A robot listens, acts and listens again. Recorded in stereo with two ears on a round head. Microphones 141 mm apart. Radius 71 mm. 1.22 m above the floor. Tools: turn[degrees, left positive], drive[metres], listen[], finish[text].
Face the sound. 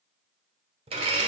Thought: The blender: about 35° right or 145° right.
Action: turn[-35]
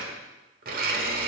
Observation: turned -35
Thought: So it is at 100° right.
Action: turn[-100]
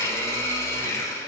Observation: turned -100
Thought: The blender is now 20° left.
Action: turn[20]
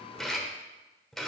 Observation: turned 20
Action: finish[Facing the blender, 1 to 2 m away.]